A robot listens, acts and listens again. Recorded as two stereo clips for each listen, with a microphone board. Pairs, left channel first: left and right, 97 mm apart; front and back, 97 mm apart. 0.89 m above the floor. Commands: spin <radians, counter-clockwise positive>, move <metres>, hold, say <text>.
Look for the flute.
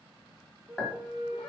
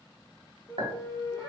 spin -0.96
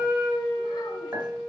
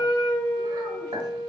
spin -0.44
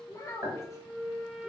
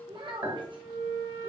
spin -0.17
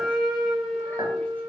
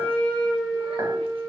say Facing the flute, under 1 m away.